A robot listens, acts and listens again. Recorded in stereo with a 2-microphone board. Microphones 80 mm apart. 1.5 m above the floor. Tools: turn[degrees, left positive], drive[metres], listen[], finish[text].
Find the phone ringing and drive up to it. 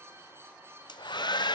Action: listen[]
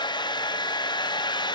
Action: listen[]
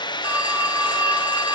Thought: The phone ringing: about 20° right or 160° right.
Action: turn[-20]
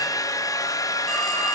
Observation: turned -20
Action: drive[1.0]
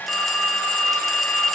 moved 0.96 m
Action: drive[1.0]
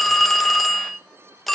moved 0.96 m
Action: drive[1.0]
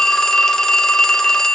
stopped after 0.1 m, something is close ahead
Thought: The phone ringing is now 10° left.
Action: turn[10]
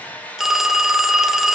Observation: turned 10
Action: finish[I am next to the phone ringing.]